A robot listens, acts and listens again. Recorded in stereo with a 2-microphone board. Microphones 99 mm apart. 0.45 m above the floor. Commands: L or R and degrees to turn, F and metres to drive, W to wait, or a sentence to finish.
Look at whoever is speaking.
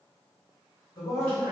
L40
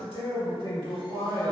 L90
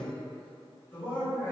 L25
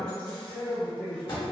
L15
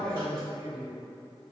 Facing the man speaking, 1 to 2 m away.